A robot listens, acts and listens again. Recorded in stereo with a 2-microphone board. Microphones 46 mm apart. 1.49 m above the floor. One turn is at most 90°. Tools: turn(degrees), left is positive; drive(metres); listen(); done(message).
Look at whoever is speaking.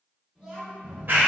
turn(degrees=-30)
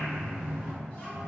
listen()
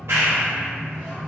listen()
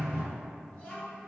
turn(degrees=20)
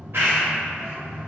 listen()
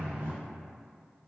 listen()
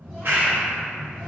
done("I heard a child speaking from this way, but can't make it out now.")